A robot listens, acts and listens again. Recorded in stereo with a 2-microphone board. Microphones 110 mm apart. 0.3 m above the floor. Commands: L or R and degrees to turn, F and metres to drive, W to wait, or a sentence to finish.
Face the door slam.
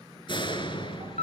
L45
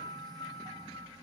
W
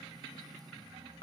I heard a door slam, but can't make it out now. It was about straight ahead or 90° left.